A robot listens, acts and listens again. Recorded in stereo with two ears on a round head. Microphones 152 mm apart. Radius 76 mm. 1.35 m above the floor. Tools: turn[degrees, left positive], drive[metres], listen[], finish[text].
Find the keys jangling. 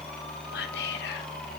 Action: listen[]
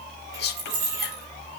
Thought: The keys jangling: about 65° right or 115° right.
Action: turn[-65]
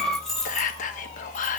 Action: finish[Facing the keys jangling, 2 to 4 m away.]